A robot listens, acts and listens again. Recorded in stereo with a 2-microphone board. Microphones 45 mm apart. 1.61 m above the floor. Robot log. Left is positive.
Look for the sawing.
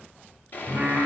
note: The sawing: about 40° left or 140° left.
cmd yaw +40
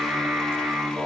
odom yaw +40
cmd idle
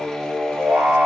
cmd idle
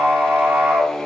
end: I heard sawing, but can't make it out now. It was about straight ahead or 100° left.